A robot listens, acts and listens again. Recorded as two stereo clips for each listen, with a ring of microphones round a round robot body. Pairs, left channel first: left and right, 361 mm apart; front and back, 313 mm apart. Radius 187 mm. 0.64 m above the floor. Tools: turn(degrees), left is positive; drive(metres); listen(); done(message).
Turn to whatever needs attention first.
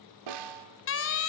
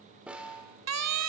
turn(degrees=145)
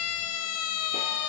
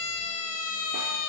turn(degrees=40)
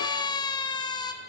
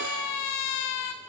turn(degrees=10)
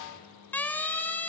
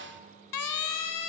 done("Facing the siren, 2 to 4 m away.")